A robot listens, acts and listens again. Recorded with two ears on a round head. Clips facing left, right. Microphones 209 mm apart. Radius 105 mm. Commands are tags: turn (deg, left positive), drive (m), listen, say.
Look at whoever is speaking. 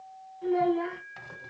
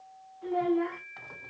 <turn deg="30"/>
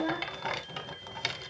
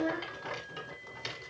<say>Found it: a child speaking, straight ahead.</say>